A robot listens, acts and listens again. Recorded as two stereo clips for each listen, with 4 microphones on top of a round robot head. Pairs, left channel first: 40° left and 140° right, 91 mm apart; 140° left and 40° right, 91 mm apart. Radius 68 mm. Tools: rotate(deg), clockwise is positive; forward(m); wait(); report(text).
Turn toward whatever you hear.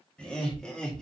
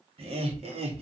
rotate(40)
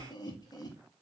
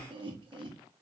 rotate(10)
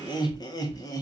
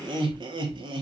rotate(10)
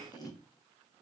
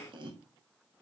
rotate(10)
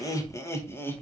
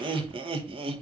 rotate(25)
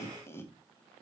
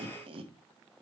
rotate(25)
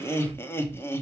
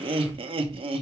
rotate(25)
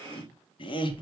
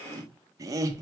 rotate(-15)
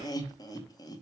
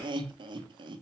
report("Facing the laughter.")